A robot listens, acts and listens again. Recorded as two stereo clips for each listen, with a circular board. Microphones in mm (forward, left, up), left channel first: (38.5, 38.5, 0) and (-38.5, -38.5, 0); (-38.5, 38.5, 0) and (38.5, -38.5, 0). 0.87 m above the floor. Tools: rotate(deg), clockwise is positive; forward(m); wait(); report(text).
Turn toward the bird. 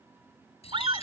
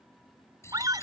rotate(-70)
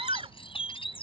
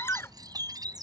rotate(-10)
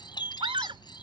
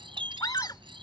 report("Found it: a bird, straight ahead.")